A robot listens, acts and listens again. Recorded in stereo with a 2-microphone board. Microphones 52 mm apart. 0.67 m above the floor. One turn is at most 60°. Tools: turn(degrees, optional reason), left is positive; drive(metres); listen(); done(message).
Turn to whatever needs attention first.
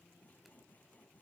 listen()
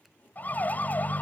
turn(degrees=35, reason="The siren: about 35° left or 145° left.")
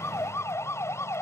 turn(degrees=60, reason="So it is at 110° left.")
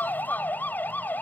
turn(degrees=40, reason="The siren is now 40° left.")
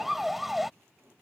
done("Found it: a siren, straight ahead.")